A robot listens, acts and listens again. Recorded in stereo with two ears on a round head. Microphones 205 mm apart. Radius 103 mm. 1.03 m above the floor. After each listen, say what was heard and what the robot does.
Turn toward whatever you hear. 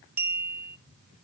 Turn 30° right.
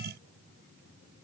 Keep listening.
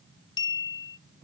So it is at 20° left. Turn 20° left.
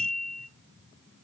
Facing the clink.